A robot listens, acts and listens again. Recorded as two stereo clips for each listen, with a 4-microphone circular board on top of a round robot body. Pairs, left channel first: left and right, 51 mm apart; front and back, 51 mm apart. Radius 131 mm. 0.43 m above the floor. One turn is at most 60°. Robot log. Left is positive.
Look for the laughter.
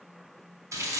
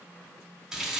cmd idle
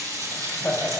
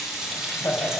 note: The laughter: 25° left.
cmd yaw +25
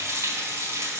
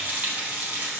cmd idle
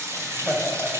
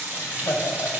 end: Facing the laughter.